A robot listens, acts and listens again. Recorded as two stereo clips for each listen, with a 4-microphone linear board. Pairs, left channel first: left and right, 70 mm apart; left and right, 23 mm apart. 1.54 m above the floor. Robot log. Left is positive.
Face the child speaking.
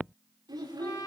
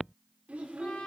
cmd yaw -90
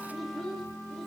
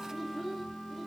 end: Found it: a child speaking, straight ahead, over 4 m away.